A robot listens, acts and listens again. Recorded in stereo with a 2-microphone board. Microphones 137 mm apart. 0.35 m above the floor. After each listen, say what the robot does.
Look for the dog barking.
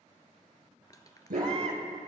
Turn 90° right.
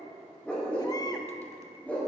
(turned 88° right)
Turn 10° left.
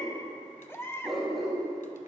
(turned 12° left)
Facing the dog barking, over 4 m away.